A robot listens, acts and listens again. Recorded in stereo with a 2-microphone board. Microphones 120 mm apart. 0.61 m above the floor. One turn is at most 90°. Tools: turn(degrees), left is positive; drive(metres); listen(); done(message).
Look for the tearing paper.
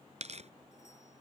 turn(degrees=-65)
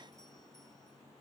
listen()
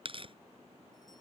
turn(degrees=-50)
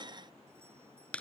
turn(degrees=10)
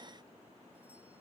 listen()
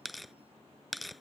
done("Found it: tearing paper, straight ahead.")